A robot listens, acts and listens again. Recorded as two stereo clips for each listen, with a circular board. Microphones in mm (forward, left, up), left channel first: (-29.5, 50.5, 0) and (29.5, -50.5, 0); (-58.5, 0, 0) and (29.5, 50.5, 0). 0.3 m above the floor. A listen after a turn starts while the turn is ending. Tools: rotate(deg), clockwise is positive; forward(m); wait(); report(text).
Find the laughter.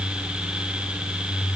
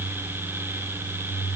wait()
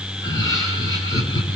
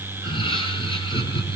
rotate(-175)
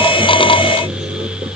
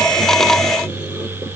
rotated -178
wait()
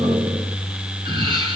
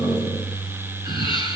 rotate(15)
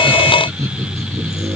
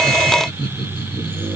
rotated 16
report("Found it: laughter, straight ahead, over 4 m away.")